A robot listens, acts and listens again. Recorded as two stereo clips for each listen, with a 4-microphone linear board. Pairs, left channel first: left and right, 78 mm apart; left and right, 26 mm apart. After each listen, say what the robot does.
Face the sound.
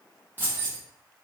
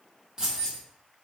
Turn 25° right.
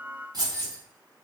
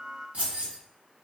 Turn 125° right.
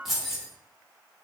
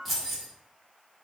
Found it: keys jangling, straight ahead.